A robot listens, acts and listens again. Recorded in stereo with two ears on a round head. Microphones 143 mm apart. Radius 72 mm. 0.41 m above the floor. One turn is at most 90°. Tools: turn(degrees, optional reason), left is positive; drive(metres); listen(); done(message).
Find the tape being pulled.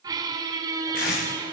turn(degrees=60, reason="The tape being pulled: about 60° left or 120° left.")
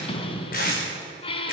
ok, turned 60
turn(degrees=60, reason="So it is at 60° left.")
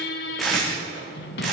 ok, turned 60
done("Facing the tape being pulled, over 4 m away.")